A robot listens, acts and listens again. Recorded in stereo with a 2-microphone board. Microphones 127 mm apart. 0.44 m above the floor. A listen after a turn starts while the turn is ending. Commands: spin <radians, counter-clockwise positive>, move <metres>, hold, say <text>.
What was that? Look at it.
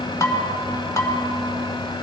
spin 0.44
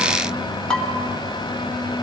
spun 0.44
say Found it: dishes clattering, straight ahead, 1 to 2 m away.